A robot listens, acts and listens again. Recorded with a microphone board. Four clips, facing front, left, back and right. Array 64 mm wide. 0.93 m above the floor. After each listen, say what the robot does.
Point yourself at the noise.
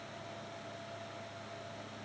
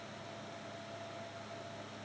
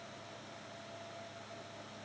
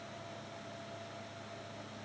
Keep listening.
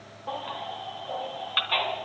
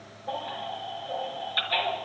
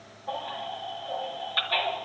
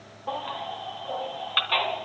Turn 55° right.
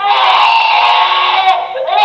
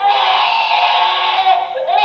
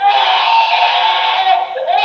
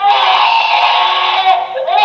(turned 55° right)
Turn 10° right.
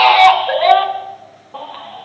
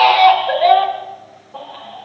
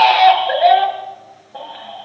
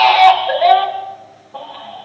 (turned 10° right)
Found it: a baby crying, straight ahead, 2 to 4 m away.